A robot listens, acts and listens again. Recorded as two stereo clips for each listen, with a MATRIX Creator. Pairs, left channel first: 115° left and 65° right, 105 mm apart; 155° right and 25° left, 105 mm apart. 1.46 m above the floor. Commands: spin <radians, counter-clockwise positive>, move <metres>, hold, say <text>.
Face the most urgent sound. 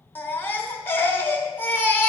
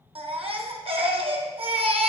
spin 0.70
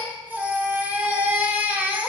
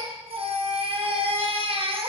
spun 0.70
say Found it: a baby crying, straight ahead, 1 to 2 m away.